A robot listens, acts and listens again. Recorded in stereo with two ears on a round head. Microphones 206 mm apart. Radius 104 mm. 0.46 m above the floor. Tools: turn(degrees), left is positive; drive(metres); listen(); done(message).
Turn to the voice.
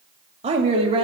turn(degrees=-25)
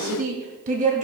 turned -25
turn(degrees=-35)
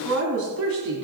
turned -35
turn(degrees=-115)
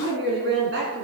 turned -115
turn(degrees=-50)
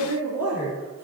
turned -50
turn(degrees=-10)
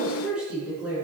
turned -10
done("Found it: a woman speaking, straight ahead, over 4 m away.")